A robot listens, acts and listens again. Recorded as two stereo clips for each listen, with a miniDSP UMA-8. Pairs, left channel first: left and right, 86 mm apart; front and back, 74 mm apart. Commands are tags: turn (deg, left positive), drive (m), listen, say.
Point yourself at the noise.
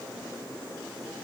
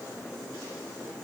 <listen/>
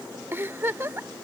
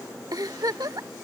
<turn deg="-150"/>
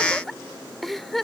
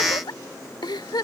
<say>Found it: a giggle, straight ahead.</say>